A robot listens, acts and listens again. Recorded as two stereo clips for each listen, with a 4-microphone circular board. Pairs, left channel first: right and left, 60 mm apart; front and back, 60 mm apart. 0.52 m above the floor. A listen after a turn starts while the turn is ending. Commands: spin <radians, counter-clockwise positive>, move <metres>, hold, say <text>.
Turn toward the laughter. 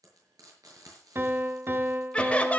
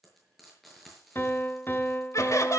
spin -0.44
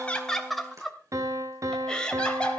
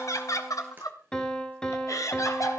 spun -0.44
spin -0.35
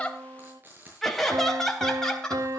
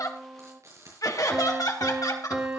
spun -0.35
spin -0.17
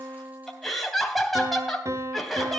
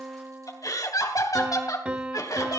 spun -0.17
say Facing the laughter, 2 to 4 m away.